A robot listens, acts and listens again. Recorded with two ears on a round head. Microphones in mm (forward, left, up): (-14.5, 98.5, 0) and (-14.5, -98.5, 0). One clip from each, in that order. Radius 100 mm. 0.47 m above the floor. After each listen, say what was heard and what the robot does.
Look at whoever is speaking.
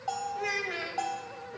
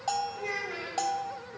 The child speaking: about 35° left or 145° left. Turn 35° left.
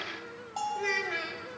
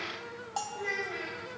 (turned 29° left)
So it is at 110° left. Turn 110° left.
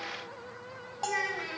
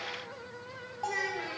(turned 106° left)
Facing the child speaking.